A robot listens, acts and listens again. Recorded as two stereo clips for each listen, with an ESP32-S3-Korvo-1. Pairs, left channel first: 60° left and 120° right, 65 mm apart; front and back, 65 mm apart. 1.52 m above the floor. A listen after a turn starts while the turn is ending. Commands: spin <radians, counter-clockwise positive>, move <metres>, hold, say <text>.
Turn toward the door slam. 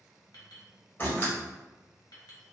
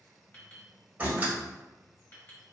spin 2.01
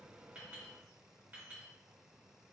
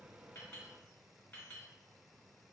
say Facing where the door slam came from. I can't hear it now.